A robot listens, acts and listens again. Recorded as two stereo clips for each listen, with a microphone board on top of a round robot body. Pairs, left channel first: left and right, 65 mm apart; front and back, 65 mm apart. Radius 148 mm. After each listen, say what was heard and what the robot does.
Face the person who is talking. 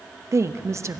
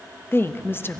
The woman speaking: 50° right. Turn 50° right.
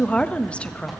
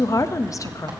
The woman speaking is now 20° left. Turn 20° left.
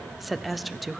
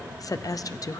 Facing the woman speaking, under 1 m away.